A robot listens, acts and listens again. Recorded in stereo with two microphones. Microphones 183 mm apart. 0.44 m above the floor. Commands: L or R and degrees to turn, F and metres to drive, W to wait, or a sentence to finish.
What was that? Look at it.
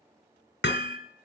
L90
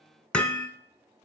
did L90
Found it: hammering, straight ahead, 1 to 2 m away.